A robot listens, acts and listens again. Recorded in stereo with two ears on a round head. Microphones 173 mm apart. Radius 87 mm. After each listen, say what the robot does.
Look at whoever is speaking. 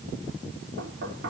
Keep listening.
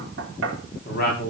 Turn 50° left.
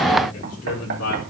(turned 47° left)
Turn 90° left.
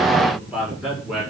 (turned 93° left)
Found it: a man speaking, straight ahead.